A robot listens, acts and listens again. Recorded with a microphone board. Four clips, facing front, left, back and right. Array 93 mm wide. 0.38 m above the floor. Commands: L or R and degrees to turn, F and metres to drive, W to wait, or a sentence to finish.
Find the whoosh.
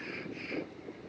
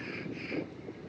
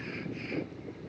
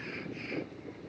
W
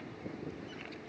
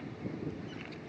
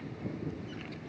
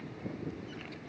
W
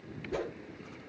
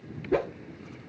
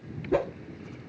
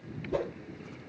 L120
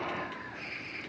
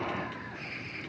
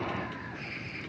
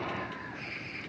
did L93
L25
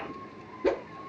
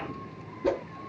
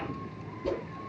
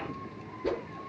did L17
L10
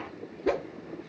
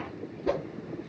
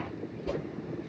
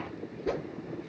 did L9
Facing the whoosh.